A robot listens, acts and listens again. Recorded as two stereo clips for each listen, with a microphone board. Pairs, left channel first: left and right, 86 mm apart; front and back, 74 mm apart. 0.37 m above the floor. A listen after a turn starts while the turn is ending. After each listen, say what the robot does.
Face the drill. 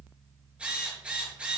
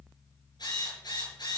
Turn 15° right.
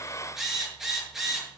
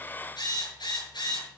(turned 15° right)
Found it: a drill, straight ahead, over 4 m away.